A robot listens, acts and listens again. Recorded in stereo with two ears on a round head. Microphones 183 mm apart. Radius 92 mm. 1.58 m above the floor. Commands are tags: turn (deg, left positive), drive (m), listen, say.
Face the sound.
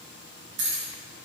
<turn deg="-60"/>
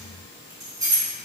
<turn deg="-20"/>
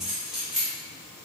<say>Facing the keys jangling, 1 to 2 m away.</say>